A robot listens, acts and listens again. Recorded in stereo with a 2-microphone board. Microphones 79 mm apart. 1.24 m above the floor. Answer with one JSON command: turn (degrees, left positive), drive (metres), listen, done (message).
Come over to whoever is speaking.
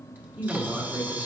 {"turn": -15}
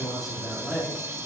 {"drive": 1.0}
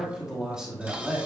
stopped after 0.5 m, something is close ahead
{"turn": -10}
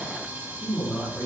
{"done": "Something is in my way. I am facing the man speaking but have not reached it."}